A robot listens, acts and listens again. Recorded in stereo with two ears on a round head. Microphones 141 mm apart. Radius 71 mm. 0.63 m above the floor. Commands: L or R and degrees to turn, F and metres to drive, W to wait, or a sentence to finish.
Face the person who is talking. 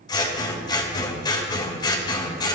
W
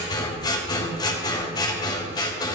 W
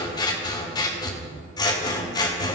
I can't make out anyone speaking, only scissors.